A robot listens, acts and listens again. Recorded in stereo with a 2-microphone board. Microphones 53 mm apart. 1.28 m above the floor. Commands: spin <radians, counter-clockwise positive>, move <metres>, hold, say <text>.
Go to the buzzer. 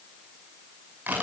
hold
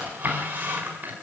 hold
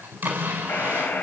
spin 0.61
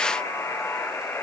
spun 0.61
spin 1.83
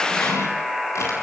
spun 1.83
move 1.0
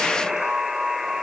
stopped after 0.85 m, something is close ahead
say I am next to the buzzer.